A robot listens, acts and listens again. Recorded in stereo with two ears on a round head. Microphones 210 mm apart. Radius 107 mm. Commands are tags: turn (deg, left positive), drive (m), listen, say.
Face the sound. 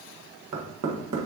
<turn deg="-90"/>
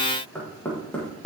<say>Facing the knocking, 1 to 2 m away.</say>